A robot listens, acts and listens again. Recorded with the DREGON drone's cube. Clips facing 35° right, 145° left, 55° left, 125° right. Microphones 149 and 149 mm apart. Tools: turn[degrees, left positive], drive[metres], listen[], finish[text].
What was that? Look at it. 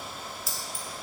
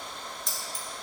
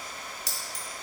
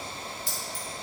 Thought: The keys jangling: 50° left.
Action: turn[50]
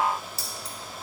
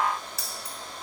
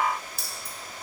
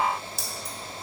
Thought: The keys jangling is now 25° left.
Action: turn[25]
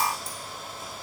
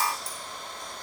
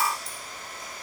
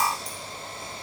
Action: listen[]
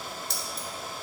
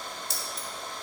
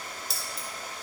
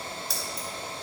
Action: finish[Found it: keys jangling, straight ahead, 1 to 2 m away.]